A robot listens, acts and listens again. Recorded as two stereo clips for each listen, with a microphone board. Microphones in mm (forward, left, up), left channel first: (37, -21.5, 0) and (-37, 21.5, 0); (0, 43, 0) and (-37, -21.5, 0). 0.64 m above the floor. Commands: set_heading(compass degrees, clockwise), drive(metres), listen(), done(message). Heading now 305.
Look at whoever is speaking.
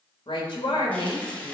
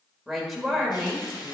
set_heading(335)
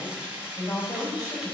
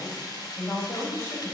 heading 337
set_heading(327)
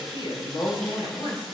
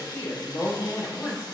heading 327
done("Facing the woman speaking.")